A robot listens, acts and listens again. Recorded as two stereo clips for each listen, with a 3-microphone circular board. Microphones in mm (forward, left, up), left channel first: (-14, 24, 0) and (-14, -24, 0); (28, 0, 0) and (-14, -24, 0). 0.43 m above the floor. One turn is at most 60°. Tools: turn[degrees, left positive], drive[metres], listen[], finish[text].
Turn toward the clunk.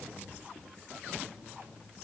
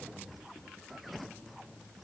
Action: listen[]
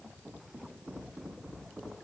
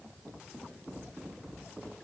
Action: listen[]
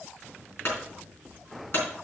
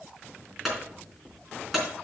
Thought: The clunk: 120° left.
Action: turn[60]
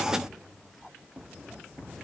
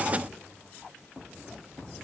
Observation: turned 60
Thought: Nothing new. It was at 60° left.
Action: turn[60]
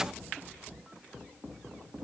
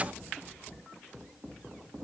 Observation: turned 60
Action: finish[I heard a clunk from this way, but can't make it out now.]